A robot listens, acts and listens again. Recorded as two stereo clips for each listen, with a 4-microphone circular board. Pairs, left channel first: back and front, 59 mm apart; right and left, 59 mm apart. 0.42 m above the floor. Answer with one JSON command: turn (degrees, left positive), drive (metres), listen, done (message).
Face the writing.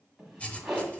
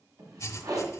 {"turn": -115}
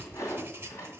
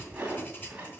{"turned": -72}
{"turn": -40}
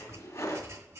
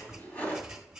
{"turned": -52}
{"turn": 10}
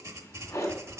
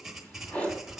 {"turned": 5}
{"done": "Facing the writing."}